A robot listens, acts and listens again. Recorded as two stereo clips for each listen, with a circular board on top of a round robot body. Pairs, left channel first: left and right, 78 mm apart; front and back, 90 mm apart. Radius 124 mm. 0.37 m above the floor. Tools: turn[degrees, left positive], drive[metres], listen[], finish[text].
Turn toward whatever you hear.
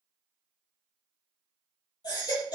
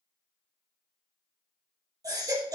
Thought: The baby crying: 130° left.
Action: turn[130]
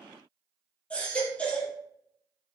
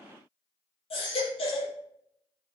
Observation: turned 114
Thought: The baby crying is now 15° left.
Action: turn[15]
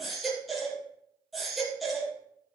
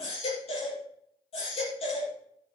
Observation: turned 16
Action: finish[Facing the baby crying.]